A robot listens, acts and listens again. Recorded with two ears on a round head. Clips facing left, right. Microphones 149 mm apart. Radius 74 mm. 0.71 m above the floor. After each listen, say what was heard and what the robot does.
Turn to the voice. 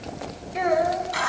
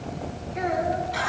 Turn 90° left.
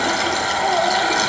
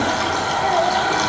Keep listening.
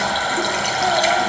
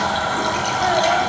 Keep listening.
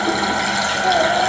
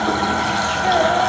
I heard a child speaking from this way, but can't make it out now.